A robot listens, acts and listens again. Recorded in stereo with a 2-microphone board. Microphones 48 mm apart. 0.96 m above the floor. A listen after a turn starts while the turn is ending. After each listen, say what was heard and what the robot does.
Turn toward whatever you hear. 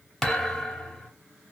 Turn 30° left.
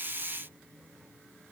Keep listening.
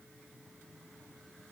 I heard a thud, but can't make it out now. It was about 20° right or 140° left.